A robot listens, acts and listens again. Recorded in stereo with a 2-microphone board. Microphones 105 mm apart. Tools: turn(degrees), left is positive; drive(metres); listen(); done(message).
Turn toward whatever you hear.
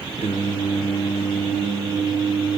turn(degrees=70)
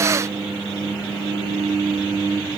turn(degrees=50)
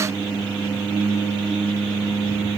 turn(degrees=20)
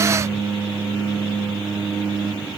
done("Found it: singing, straight ahead.")